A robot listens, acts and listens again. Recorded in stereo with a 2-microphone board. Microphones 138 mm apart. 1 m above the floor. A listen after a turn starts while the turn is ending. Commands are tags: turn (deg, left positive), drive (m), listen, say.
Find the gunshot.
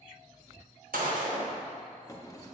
<turn deg="-90"/>
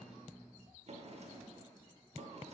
<say>I heard a gunshot from this way, but can't make it out now.</say>